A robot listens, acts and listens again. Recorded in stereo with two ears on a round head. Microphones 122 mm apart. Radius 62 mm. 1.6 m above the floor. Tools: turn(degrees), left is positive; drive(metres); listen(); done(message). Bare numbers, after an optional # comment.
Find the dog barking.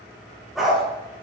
turn(30)
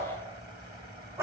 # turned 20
# So it is at 20° right.
turn(-20)
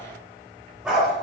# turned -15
done("Facing the dog barking.")